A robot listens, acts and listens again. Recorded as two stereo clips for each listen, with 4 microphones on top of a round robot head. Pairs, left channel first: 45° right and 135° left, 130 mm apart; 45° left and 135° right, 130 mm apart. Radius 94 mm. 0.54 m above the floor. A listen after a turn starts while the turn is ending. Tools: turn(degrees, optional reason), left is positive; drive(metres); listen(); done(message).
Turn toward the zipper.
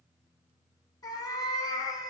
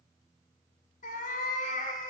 listen()
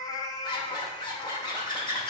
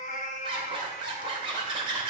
turn(degrees=-90, reason="The zipper: 90° right.")
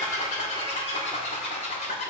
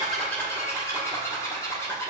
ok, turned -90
turn(degrees=-25, reason="The zipper is now 25° right.")
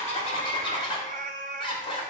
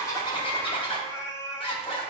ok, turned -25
done("Facing the zipper.")